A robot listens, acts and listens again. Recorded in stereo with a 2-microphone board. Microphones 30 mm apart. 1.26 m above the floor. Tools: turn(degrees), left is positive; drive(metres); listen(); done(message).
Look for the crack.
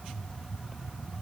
listen()
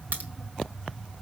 turn(degrees=-90)
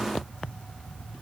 done("Facing where the crack came from. I can't hear it now.")